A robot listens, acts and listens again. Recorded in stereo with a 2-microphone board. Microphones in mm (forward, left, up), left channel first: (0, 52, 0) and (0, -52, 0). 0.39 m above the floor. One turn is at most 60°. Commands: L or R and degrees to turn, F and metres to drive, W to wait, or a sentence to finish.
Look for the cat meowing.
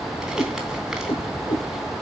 L55
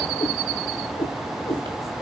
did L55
L45
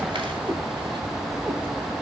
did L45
W
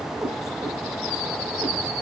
R30
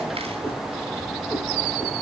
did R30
Found it: a cat meowing, straight ahead.